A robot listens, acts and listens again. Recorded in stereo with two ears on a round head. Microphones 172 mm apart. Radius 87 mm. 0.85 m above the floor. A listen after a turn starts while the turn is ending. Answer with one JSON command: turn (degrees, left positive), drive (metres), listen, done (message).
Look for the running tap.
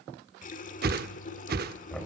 {"turn": 45}
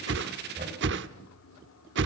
{"turn": 90}
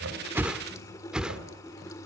{"turn": 15}
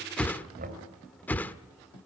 {"done": "Found it: a running tap, straight ahead, 1 to 2 m away."}